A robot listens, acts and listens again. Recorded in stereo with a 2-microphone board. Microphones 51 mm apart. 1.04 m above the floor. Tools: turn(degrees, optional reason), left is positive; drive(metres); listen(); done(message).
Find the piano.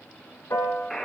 turn(degrees=65, reason="The piano: about 65° left or 115° left.")
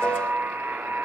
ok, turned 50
listen()
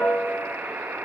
turn(degrees=40, reason="So it is at 40° left.")
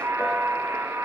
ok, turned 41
listen()
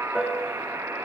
done("Found it: a piano, straight ahead.")